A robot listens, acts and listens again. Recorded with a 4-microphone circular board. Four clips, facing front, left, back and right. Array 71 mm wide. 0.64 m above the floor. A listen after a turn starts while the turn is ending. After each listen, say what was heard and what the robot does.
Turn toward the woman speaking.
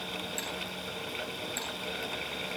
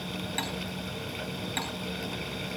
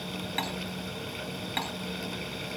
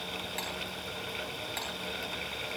Keep listening.
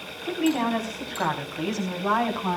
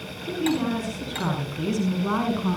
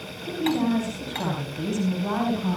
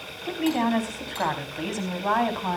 The woman speaking: 60° right. Turn 60° right.
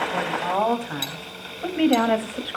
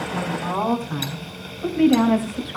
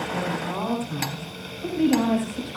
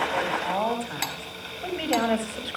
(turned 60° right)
The woman speaking is now 15° right. Turn 15° right.
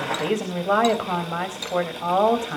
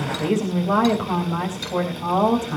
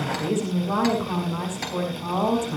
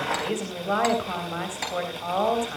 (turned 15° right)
Facing the woman speaking.